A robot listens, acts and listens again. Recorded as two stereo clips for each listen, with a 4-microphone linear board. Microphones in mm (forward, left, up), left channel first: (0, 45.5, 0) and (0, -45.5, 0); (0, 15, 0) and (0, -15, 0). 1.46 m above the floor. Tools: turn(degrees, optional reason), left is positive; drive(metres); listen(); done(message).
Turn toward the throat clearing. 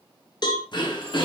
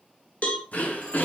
turn(degrees=55, reason="The throat clearing: about 55° left or 125° left.")
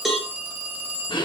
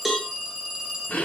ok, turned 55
turn(degrees=60, reason="So it is at 60° left.")
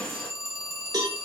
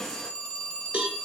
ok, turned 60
turn(degrees=10, reason="The throat clearing is now 10° left.")
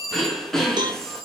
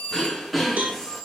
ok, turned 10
done("Facing the throat clearing.")